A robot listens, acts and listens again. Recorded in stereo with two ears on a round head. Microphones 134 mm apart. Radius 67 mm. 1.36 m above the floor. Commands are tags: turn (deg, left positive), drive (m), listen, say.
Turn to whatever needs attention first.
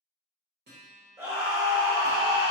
<turn deg="-20"/>
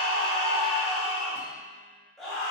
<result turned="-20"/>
<say>Found it: a scream, straight ahead.</say>